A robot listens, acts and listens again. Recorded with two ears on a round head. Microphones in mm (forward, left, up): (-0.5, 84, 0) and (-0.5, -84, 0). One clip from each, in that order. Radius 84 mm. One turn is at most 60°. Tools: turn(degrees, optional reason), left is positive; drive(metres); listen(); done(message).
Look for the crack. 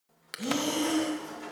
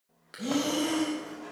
turn(degrees=60, reason="The crack: about 60° left or 120° left.")
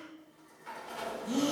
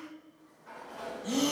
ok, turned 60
listen()
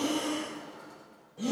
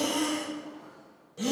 done("I heard a crack, but can't make it out now. It was about straight ahead or 60° left.")